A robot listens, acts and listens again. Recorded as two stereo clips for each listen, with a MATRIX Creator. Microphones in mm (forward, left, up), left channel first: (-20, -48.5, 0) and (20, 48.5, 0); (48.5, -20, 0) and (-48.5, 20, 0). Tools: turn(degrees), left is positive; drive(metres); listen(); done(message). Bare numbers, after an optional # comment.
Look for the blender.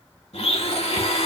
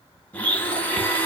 # The blender: 95° right.
turn(-95)
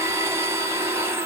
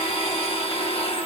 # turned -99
done("Facing the blender.")